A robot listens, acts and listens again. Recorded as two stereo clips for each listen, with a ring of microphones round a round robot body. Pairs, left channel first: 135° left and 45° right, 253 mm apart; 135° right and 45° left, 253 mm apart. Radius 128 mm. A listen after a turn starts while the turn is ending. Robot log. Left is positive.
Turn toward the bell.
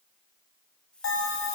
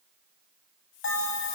note: The bell: straight behind.
cmd yaw +180
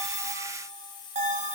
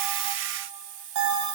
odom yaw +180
note: The bell is now 20° left.
cmd yaw +20
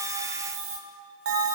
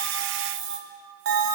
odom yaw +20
end: Found it: a bell, straight ahead, 2 to 4 m away.